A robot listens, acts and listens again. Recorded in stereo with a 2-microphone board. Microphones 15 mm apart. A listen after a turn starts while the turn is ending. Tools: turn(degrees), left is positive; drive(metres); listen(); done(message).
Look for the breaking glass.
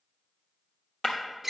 turn(degrees=50)
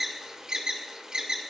listen()
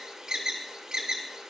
done("I heard breaking glass, but can't make it out now. It was about straight ahead or 80° left.")